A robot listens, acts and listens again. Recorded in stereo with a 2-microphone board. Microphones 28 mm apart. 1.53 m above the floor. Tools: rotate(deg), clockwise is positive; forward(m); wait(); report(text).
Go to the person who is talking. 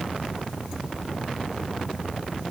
wait()
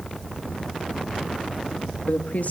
rotate(-60)
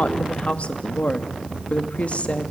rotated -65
rotate(-55)
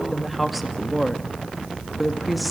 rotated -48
forward(1.0)
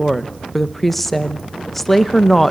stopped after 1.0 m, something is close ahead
rotate(-10)
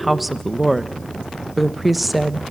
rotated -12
report("I am next to the woman speaking.")